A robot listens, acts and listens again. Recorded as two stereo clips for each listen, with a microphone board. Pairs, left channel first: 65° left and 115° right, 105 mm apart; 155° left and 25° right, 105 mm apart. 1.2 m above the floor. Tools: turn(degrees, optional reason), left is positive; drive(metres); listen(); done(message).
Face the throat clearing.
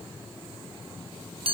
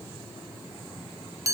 listen()
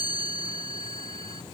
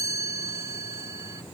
listen()
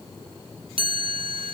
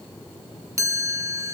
done("I can't make out throat clearing, only a chime.")